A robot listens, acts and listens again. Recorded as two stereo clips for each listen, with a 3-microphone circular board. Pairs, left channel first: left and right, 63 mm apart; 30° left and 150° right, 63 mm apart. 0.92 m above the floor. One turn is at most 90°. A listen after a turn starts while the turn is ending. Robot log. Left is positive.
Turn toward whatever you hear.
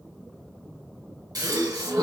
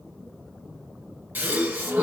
note: The gasp: 90° right.
cmd yaw -90
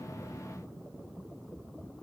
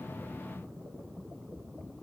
end: Facing where the gasp came from. I can't hear it now.